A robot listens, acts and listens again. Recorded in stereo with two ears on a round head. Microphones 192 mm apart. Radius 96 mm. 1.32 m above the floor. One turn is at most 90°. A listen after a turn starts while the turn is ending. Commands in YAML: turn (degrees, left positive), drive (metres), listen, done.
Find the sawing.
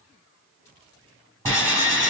turn: 30
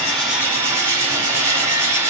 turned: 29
turn: -15
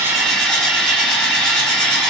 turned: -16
done: "Found it: sawing, straight ahead."